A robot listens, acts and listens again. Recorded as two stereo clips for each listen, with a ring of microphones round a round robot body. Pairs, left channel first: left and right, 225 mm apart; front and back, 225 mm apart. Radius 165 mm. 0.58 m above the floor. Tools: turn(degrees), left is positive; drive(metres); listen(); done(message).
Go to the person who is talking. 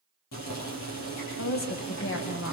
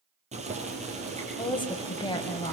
turn(degrees=70)
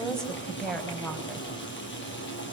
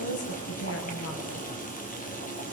drive(metres=1.0)
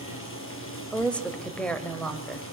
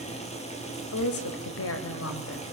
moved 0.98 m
drive(metres=1.0)
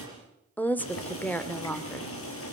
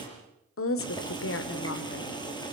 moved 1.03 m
drive(metres=1.0)
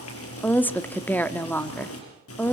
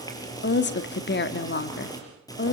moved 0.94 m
turn(degrees=10)
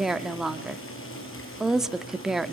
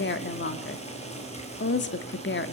drive(metres=1.0)
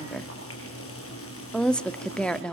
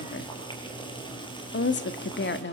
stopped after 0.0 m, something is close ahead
done("Arrived at the woman speaking, straight ahead.")